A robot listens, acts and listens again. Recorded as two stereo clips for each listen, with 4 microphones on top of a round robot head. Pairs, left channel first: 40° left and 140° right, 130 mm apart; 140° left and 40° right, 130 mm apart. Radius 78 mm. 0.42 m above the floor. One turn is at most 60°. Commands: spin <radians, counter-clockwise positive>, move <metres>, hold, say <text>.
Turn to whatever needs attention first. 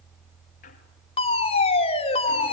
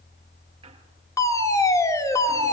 spin 1.05
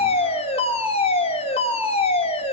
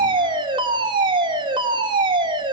spin 0.17
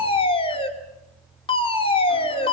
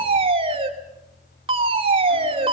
say Facing the fire alarm, 2 to 4 m away.